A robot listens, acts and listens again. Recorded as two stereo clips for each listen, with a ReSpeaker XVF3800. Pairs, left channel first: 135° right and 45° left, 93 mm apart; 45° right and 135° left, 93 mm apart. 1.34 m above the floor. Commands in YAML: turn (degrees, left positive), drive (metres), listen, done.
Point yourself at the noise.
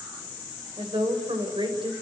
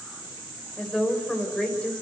turn: 35
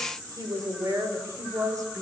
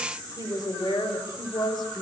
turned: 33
turn: -10
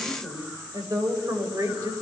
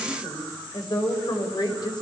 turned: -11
turn: -10
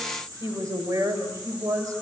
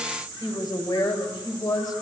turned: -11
done: "Found it: a woman speaking, straight ahead, over 4 m away."